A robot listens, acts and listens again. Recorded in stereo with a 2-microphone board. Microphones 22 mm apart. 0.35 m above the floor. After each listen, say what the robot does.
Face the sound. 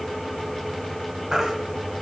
Turn 20° right.
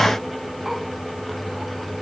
Keep listening.
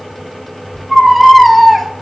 Facing the baby crying, 1 to 2 m away.